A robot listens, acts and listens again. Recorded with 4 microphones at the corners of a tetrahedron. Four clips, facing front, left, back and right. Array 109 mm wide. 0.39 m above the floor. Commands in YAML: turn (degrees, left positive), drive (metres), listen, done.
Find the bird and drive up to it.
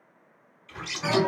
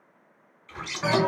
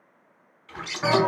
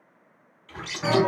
turn: -155
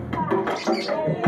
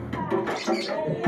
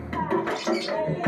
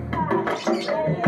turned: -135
turn: -20
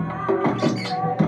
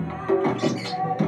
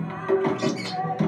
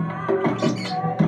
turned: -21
drive: 1.0
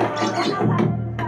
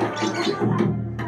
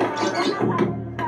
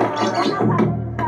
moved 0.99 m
listen: true
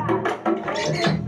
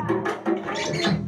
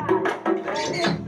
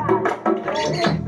drive: 1.0
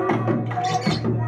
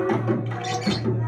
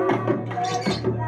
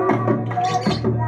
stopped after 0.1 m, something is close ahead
listen: true
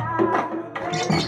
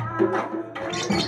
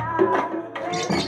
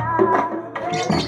done: "Arrived at the bird, straight ahead."